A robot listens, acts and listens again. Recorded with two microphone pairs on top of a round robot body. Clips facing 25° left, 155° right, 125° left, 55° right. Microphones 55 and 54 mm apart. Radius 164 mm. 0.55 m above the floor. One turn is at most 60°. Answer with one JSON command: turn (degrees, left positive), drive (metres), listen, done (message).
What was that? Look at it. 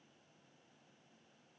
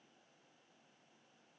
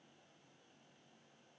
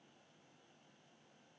{"listen": true}
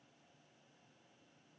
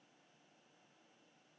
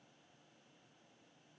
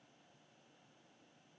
{"listen": true}
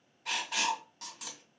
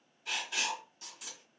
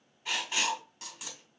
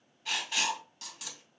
{"turn": 55}
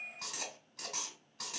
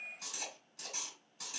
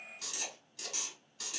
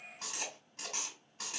{"done": "Found it: writing, straight ahead, 1 to 2 m away."}